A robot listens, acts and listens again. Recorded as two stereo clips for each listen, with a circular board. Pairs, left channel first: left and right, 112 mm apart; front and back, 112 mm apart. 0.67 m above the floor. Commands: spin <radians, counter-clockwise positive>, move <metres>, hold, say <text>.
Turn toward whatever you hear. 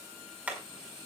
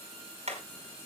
spin -2.88
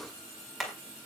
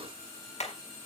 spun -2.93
say Facing the hammering.